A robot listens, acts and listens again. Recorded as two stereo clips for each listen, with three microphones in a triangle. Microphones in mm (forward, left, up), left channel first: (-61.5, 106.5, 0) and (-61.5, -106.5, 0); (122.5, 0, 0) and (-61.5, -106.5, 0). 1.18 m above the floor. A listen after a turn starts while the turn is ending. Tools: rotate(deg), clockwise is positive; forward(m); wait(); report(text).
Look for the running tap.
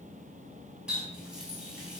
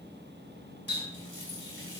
rotate(175)
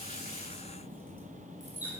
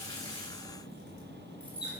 rotate(10)
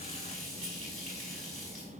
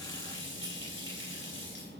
report("Facing the running tap.")